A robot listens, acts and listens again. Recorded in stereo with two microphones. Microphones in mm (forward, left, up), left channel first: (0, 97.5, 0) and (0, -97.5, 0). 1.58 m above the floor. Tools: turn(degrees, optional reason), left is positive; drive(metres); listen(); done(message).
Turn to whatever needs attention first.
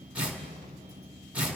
listen()
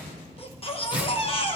turn(degrees=30, reason="The baby crying: about 30° left or 150° left.")
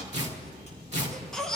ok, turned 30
done("Facing the baby crying.")